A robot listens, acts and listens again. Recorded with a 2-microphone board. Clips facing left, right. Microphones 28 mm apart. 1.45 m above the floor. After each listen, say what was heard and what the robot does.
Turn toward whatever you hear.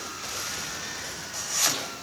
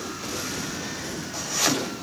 The chopping: about 20° right or 160° right. Turn 20° right.
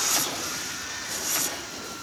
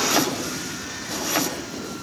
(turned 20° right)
So it is at 140° right. Turn 140° right.
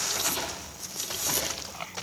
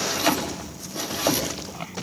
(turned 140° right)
The chopping is now 40° right. Turn 40° right.
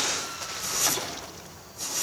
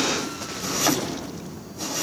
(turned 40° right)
The chopping is now 10° right. Turn 10° right.
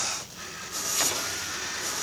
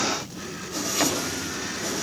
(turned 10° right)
Facing the chopping.